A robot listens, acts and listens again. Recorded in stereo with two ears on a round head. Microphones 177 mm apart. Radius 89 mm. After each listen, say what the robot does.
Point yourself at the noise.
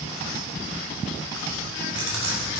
Turn 70° right.
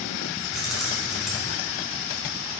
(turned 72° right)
Facing the keys jangling, 2 to 4 m away.